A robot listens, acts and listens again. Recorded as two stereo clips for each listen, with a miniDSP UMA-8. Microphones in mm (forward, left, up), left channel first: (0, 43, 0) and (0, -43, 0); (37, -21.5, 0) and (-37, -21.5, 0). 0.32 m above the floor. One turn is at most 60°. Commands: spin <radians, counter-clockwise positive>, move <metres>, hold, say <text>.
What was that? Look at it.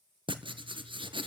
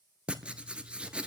spin -1.05
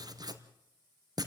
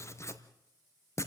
spin -0.87
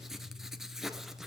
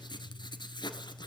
say Facing the writing, 1 to 2 m away.